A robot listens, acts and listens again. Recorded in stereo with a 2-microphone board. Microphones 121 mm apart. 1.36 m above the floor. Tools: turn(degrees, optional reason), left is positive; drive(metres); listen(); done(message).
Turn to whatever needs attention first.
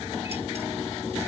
listen()
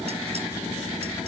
listen()
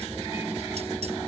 done("I can't make out anything urgent to turn to.")